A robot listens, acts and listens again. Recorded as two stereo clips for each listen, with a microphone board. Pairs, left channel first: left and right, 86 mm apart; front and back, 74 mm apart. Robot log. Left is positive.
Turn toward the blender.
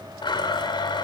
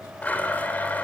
note: The blender: 65° left.
cmd yaw +65
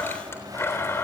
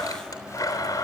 note: The blender is now 30° left.
cmd yaw +30
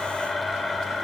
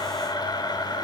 end: Found it: a blender, straight ahead, 2 to 4 m away.